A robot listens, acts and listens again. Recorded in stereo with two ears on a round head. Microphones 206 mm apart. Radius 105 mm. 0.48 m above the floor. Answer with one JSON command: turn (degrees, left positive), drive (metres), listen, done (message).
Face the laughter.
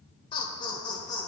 {"turn": 15}
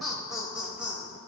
{"turn": -30}
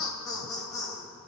{"turn": 15}
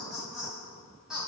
{"done": "Found it: laughter, straight ahead."}